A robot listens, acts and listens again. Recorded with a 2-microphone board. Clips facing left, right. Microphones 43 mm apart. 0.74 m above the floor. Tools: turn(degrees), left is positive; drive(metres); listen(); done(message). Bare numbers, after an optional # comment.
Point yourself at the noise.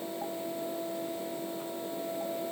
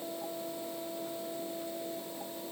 listen()
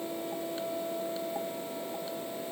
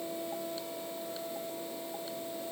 listen()
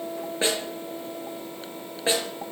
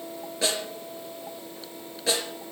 # The snare drum: about 25° left or 155° left.
turn(25)
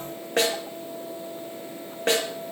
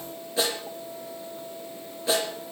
# So it is at 130° left.
turn(130)
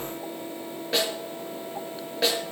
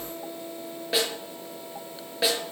done("Facing the snare drum.")